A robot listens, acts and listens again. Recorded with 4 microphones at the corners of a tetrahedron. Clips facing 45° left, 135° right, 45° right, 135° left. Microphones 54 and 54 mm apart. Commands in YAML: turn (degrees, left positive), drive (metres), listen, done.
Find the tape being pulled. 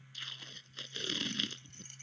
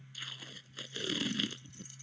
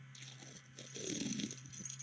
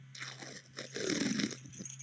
turn: 140
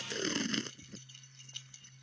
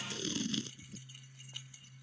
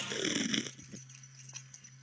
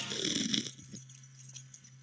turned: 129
turn: 15
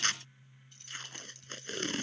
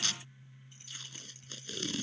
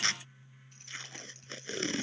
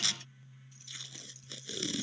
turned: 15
done: "Facing the tape being pulled."